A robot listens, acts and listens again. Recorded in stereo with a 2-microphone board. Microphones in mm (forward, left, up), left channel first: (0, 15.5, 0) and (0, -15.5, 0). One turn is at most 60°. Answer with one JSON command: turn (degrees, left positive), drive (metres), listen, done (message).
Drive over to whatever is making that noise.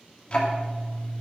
{"turn": 35}
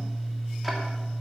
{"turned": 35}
{"drive": 1.0}
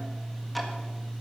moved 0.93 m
{"drive": 1.0}
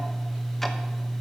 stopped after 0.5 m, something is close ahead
{"done": "I am next to the ticking."}